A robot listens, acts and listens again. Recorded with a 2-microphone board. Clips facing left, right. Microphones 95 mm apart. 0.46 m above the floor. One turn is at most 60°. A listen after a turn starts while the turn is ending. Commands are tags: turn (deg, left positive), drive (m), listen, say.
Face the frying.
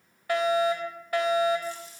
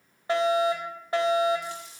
<turn deg="-60"/>
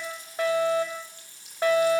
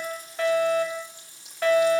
<turn deg="-15"/>
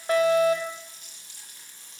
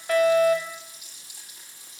<turn deg="-10"/>
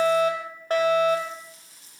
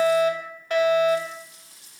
<say>Found it: frying, straight ahead.</say>